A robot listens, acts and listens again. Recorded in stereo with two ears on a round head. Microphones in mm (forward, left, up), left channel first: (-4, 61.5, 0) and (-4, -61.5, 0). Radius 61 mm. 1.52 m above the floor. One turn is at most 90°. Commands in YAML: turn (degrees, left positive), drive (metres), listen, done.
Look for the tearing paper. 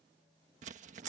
turn: -55
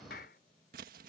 turn: -70
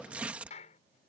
turn: -10
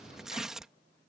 done: "Found it: tearing paper, straight ahead."